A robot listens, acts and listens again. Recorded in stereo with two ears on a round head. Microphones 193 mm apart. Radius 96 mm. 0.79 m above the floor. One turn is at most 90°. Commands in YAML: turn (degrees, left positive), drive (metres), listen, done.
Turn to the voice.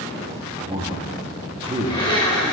turn: -25
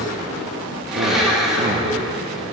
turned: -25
listen: true
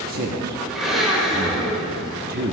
turn: -90
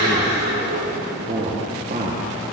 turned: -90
turn: -45
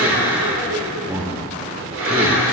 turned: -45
turn: -15
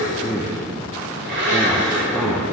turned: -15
done: "Found it: a man speaking, straight ahead, 1 to 2 m away."